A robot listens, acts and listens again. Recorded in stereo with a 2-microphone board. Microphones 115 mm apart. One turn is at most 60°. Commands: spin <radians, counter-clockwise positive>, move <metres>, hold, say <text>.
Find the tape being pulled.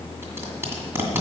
spin -0.35
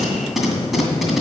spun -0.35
say Found it: tape being pulled, straight ahead, 2 to 4 m away.